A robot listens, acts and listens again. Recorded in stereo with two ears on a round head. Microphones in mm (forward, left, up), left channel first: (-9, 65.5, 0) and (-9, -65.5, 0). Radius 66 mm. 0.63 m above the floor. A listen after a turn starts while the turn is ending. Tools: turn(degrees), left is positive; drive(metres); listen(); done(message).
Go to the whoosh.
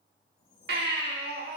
turn(degrees=60)
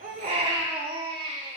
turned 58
listen()
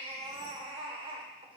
listen()
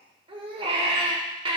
done("I heard a whoosh, but can't make it out now. It was about 5° left or 60° left. I did not reach it.")